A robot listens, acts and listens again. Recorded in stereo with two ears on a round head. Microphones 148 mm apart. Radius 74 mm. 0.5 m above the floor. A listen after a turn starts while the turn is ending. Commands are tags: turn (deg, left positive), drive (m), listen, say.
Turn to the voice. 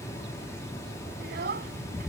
<turn deg="-65"/>
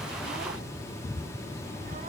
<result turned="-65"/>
<listen/>
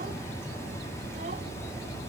<listen/>
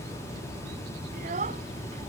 <turn deg="-50"/>
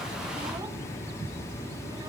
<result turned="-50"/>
<listen/>
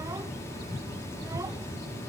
<listen/>
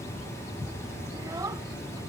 <turn deg="-20"/>
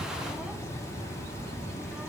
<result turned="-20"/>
<listen/>
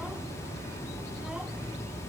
<listen/>
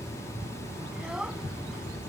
<say>Found it: a child speaking, straight ahead.</say>